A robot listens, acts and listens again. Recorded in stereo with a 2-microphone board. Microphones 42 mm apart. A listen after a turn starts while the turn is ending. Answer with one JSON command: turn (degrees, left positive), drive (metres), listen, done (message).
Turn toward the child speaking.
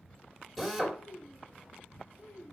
{"turn": 75}
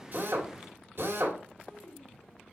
{"turn": 15}
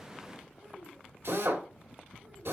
{"listen": true}
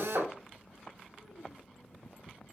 {"listen": true}
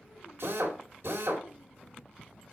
{"done": "Facing where the child speaking came from. I can't hear it now."}